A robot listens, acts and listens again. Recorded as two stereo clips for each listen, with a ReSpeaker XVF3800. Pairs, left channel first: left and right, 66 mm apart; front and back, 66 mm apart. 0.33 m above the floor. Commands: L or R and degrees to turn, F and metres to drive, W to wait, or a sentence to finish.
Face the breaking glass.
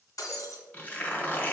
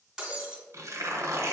L100
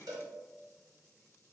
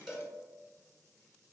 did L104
I heard breaking glass from this way, but can't make it out now.